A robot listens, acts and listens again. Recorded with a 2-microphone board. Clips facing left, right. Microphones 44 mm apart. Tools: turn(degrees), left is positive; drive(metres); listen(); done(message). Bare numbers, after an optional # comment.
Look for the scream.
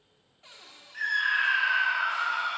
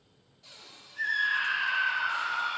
turn(90)
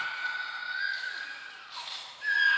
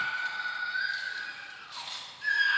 # So it is at 10° left.
turn(10)
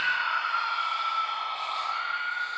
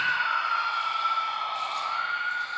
done("Found it: a scream, straight ahead.")